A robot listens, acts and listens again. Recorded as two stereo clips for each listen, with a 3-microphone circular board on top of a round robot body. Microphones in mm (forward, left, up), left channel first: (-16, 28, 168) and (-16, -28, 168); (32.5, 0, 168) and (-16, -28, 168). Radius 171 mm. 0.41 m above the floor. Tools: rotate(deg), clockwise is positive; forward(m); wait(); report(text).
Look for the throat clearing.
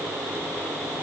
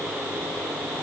wait()
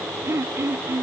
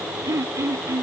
rotate(125)
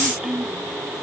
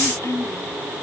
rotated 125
report("Found it: throat clearing, straight ahead.")